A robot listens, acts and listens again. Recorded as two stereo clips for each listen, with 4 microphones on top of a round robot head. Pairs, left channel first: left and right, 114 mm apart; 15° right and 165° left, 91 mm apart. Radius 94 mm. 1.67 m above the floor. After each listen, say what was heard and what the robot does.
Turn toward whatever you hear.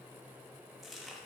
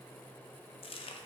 Facing the chewing, 1 to 2 m away.